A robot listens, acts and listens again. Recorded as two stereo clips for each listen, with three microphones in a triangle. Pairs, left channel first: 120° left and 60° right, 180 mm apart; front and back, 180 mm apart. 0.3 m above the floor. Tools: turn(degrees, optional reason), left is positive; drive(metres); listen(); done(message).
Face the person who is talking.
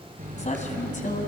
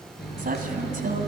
turn(degrees=150, reason="The woman speaking: 150° left.")
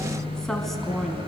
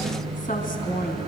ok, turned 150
turn(degrees=30, reason="The woman speaking is now 30° left.")
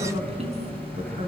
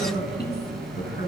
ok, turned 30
turn(degrees=-10, reason="The woman speaking is now 10° right.")
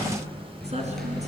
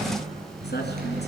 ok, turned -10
turn(degrees=-10, reason="The woman speaking is now 10° right.")
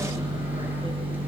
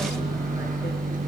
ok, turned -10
listen()
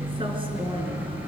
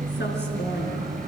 listen()
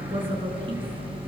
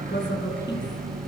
done("Found it: a woman speaking, straight ahead.")